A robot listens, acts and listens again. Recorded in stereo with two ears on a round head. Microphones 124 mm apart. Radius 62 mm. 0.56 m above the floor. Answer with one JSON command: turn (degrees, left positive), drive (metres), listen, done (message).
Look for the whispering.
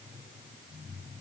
{"listen": true}
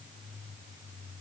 {"listen": true}
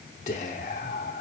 {"turn": 50}
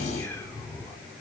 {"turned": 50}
{"turn": 20}
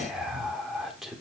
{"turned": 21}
{"done": "Facing the whispering."}